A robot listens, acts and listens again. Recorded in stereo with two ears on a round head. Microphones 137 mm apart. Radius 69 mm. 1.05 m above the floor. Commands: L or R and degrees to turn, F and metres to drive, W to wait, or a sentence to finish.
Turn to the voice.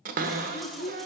L90
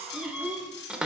Facing the child speaking.